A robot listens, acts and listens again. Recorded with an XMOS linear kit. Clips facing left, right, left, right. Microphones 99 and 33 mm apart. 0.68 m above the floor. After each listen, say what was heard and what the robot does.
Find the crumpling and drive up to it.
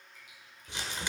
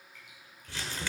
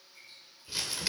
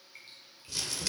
The crumpling: about 20° left or 160° left. Turn 20° left.
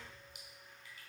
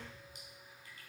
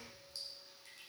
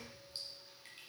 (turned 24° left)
Keep listening.
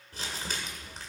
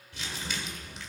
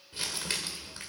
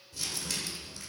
So it is at 135° left. Turn 135° left.
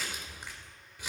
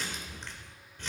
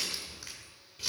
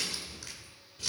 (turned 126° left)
The crumpling is now 10° left. Turn 10° left.
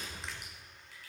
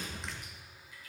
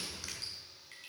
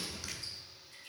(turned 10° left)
Drive 1.0 m forward.
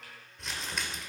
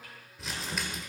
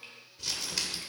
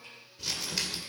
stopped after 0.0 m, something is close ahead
Blocked. The crumpling is further on, straight ahead.